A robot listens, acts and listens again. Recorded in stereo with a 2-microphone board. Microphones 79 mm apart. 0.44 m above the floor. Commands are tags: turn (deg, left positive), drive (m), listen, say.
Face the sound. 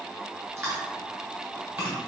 <turn deg="-35"/>
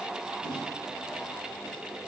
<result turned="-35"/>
<listen/>
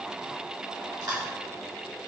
<turn deg="-105"/>
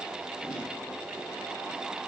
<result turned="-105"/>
<listen/>
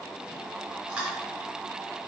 <turn deg="-20"/>
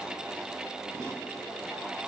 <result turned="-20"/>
<listen/>
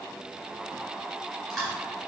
<say>Found it: chewing, straight ahead.</say>